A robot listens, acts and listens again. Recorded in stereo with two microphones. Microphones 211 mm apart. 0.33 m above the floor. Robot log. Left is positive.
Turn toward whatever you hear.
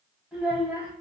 cmd yaw -30
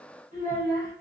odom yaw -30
note: So it is at 135° right.
cmd yaw -135
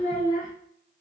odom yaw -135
note: The child speaking is now 40° left.
cmd yaw +40
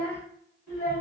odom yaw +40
note: The child speaking is now 15° left.
cmd yaw +15
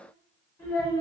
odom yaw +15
note: The child speaking is now 10° left.
cmd yaw +10
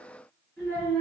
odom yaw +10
end: Facing the child speaking, 2 to 4 m away.